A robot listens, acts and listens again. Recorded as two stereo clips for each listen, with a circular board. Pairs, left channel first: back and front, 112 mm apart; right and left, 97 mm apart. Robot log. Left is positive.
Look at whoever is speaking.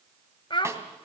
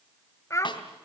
note: The child speaking: 145° right.
cmd yaw -145
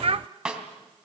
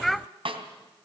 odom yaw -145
end: Found it: a child speaking, straight ahead.